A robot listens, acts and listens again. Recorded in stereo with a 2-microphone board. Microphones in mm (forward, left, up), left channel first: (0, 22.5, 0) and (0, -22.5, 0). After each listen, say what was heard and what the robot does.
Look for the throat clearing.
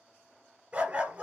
Keep listening.
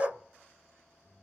Keep listening.
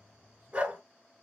I can't make out throat clearing to turn to.